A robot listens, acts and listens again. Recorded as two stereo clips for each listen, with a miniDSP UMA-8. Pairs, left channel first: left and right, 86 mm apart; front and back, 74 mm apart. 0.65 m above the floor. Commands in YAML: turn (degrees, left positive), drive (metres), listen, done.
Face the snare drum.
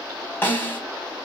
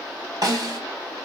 turn: 155
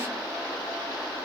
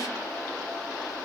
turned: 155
listen: true
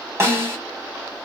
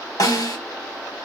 turn: -35
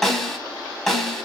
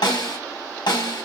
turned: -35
done: "Facing the snare drum, 1 to 2 m away."